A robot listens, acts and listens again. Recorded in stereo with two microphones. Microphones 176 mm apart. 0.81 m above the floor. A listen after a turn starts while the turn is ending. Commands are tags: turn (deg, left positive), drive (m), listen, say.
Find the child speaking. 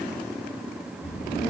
<turn deg="70"/>
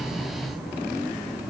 <turn deg="30"/>
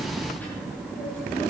<turn deg="10"/>
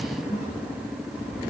<say>Found it: a child speaking, straight ahead.</say>